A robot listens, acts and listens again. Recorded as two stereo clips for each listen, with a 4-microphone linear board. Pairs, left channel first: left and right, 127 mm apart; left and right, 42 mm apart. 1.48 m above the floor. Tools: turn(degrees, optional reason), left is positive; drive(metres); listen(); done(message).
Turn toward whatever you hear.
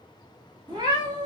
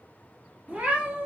turn(degrees=-35, reason="The cat meowing: about 35° right or 145° right.")
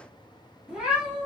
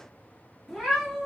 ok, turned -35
turn(degrees=-10, reason="So it is at 10° right.")
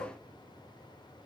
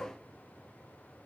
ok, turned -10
listen()
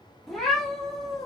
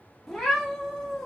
done("Found it: a cat meowing, straight ahead, 1 to 2 m away.")